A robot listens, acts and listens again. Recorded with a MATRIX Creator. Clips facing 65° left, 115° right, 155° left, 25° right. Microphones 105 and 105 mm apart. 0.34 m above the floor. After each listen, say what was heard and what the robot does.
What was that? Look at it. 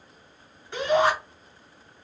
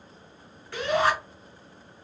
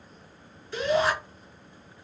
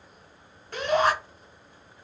Facing the shout, 2 to 4 m away.